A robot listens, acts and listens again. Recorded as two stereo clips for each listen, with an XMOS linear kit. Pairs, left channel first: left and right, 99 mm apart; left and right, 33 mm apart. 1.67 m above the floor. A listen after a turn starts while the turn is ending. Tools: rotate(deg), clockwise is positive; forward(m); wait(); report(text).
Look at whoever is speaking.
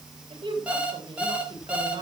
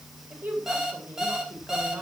rotate(55)
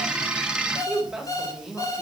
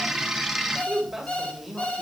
report("Found it: a woman speaking, straight ahead.")